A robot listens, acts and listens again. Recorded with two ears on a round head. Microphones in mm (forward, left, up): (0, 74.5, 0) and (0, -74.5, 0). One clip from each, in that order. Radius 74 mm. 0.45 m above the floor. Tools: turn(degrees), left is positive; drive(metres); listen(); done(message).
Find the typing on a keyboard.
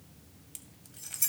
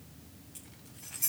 listen()
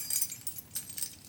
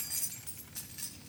listen()
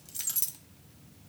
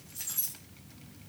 done("I can't make out typing on a keyboard, only keys jangling.")